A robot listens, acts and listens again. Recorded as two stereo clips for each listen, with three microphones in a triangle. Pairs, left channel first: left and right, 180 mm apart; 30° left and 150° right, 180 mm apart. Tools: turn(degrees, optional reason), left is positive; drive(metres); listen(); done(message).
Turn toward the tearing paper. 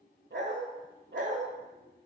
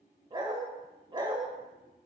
listen()
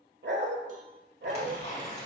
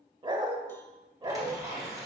turn(degrees=140, reason="The tearing paper: 140° left.")
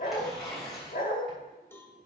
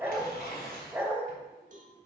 done("Facing the tearing paper.")